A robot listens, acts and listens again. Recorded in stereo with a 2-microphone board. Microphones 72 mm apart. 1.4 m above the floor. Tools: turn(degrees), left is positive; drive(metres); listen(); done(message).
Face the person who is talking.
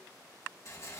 listen()
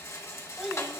turn(degrees=-30)
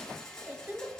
turn(degrees=-145)
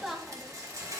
done("Found it: a child speaking, straight ahead.")